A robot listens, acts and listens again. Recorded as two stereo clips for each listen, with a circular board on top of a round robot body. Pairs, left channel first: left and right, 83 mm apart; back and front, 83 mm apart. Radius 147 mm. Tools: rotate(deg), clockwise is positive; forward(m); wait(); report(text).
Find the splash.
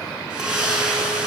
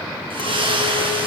rotate(10)
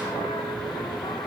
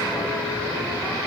report("Facing where the splash came from. I can't hear it now.")